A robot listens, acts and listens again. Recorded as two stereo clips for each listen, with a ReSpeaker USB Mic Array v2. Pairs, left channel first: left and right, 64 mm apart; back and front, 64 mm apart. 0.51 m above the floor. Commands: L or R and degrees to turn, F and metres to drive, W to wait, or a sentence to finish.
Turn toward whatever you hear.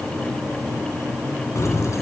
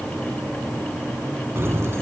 L50
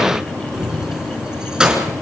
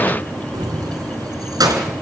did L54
R15
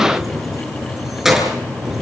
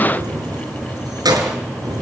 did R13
Found it: keys jangling, straight ahead.